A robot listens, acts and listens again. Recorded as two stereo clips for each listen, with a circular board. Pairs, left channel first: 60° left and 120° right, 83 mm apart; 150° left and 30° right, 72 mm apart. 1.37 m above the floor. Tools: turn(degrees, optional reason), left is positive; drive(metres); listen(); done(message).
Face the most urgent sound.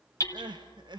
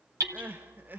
turn(degrees=-95, reason="The crying: 95° right.")
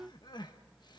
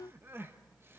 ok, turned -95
turn(degrees=30, reason="The crying is now 30° left.")
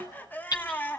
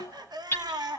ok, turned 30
turn(degrees=-10, reason="The crying is now 10° right.")
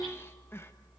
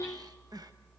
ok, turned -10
listen()
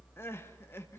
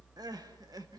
done("Found it: crying, straight ahead, 1 to 2 m away.")